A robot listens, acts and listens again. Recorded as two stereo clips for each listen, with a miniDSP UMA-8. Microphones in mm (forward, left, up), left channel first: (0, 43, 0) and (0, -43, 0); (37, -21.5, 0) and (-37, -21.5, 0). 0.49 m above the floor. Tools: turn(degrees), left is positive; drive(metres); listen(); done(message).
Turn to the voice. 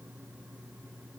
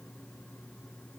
listen()
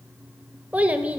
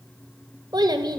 turn(degrees=-165)
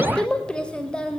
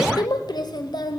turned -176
turn(degrees=10)
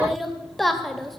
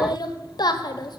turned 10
done("Facing the child speaking, 1 to 2 m away.")